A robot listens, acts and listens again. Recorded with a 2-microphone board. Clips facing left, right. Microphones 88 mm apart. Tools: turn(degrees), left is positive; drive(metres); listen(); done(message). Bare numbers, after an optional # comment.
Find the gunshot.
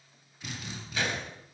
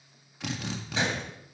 # The gunshot: about 25° right or 155° right.
turn(-25)
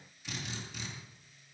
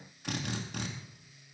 listen()
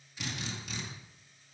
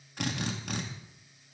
done("I heard a gunshot, but can't make it out now. It was about straight ahead or 130° right.")